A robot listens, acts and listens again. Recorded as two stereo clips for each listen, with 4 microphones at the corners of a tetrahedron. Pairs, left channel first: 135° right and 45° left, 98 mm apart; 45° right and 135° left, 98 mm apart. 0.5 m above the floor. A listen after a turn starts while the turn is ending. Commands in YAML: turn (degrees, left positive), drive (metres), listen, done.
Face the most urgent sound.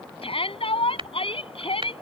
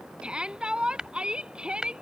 turn: -145
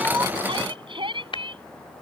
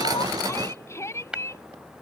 turn: 15
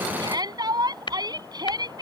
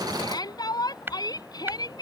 done: "Found it: a shout, straight ahead."